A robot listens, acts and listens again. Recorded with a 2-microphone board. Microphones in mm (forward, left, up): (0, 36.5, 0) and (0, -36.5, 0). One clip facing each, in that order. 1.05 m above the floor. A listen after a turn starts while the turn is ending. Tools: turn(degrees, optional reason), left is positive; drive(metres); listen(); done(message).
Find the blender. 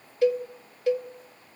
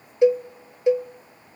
listen()
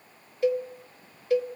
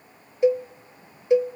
listen()
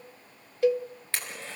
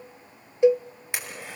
turn(degrees=-30)
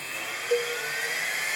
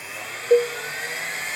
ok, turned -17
done("Facing the blender, over 4 m away.")